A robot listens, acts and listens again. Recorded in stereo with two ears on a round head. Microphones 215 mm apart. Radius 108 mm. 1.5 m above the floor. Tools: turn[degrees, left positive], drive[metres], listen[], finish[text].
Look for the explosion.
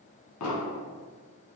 Thought: The explosion: about 75° left or 105° left.
Action: turn[75]
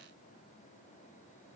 Action: listen[]
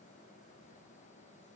Action: finish[I heard an explosion, but can't make it out now. It was about straight ahead or 30° left.]